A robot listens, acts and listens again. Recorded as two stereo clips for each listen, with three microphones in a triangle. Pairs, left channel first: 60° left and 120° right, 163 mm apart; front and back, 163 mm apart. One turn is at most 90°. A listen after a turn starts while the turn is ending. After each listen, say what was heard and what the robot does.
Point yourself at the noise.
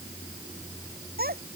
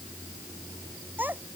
The child speaking: 100° right. Turn 90° right.
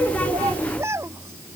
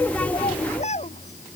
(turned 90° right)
The child speaking is now 45° right. Turn 45° right.
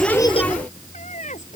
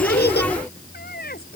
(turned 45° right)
The child speaking is now 20° left. Turn 20° left.
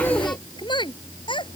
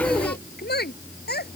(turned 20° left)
Found it: a child speaking, straight ahead.